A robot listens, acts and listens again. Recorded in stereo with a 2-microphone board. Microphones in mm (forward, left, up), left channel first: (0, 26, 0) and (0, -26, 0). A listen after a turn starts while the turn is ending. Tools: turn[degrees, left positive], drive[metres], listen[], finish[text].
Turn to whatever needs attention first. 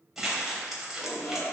Thought: The shout: about 60° left or 120° left.
Action: turn[60]
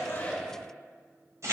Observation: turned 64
Thought: So it is at 10° left.
Action: turn[10]
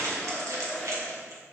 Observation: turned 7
Action: finish[Found it: a shout, straight ahead, 1 to 2 m away.]